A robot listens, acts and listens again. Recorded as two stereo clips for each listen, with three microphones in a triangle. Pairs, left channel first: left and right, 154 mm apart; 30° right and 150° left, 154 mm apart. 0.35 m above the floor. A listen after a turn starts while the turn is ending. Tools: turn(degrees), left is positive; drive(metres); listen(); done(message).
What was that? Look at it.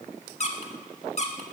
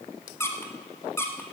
turn(degrees=45)
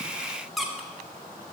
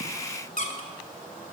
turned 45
done("Facing the squeak.")